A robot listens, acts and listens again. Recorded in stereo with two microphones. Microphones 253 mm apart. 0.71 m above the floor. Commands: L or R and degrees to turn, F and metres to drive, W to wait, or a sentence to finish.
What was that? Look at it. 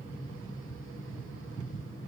W
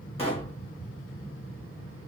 L25
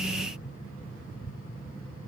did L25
W
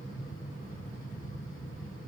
I heard a pop, but can't make it out now. It was about straight ahead or 130° left.